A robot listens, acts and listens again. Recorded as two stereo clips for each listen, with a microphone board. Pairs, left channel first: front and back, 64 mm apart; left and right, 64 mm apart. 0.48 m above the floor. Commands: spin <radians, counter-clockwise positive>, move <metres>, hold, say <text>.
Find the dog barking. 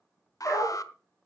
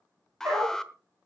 spin -0.87
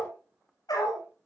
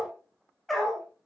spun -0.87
say Found it: a dog barking, straight ahead, over 4 m away.